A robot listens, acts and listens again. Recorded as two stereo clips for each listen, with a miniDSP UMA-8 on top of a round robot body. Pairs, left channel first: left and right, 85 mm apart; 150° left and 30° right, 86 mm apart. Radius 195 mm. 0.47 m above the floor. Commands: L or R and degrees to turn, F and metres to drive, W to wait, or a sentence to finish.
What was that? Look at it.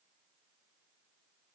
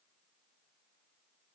W
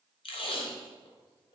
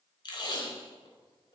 L110
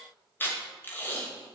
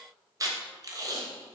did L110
L20
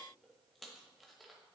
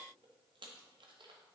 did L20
W
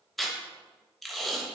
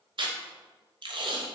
Facing the tape being pulled, under 1 m away.